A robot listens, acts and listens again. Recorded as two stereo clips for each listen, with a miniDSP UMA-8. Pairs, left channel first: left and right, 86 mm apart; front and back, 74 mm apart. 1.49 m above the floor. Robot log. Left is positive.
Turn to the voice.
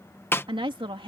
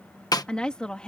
note: The woman speaking: 80° right.
cmd yaw -80
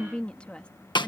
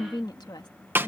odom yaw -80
note: The woman speaking is now 15° left.
cmd yaw +15
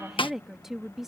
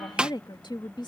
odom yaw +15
end: Found it: a woman speaking, straight ahead.